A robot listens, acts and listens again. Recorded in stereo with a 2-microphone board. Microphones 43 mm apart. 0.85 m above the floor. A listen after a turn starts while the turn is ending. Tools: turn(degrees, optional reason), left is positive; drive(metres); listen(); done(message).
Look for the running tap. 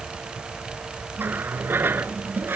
turn(degrees=-55, reason="The running tap: about 55° right or 125° right.")
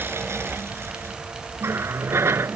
turn(degrees=-75, reason="So it is at 75° right.")
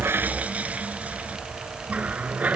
turn(degrees=-35, reason="The running tap is now 35° right.")
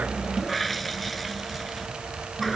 done("Found it: a running tap, straight ahead.")